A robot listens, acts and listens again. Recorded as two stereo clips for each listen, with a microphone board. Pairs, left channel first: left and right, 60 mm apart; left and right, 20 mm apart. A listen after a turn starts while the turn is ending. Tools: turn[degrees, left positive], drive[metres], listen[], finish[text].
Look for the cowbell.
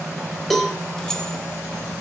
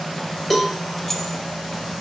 Action: turn[30]
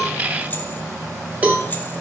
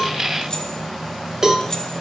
Thought: So it is at 25° right.
Action: turn[-25]
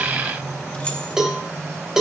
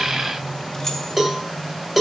Thought: The cowbell is now 10° right.
Action: turn[-10]
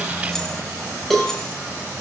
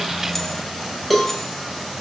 Action: finish[Found it: a cowbell, straight ahead.]